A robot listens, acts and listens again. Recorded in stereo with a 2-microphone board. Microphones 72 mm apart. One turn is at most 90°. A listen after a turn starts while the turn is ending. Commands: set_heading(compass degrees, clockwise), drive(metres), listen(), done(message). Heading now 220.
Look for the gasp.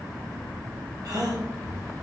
set_heading(285)
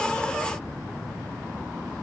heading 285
listen()
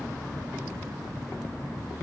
done("I heard a gasp, but can't make it out now. It was about straight ahead or 50° right.")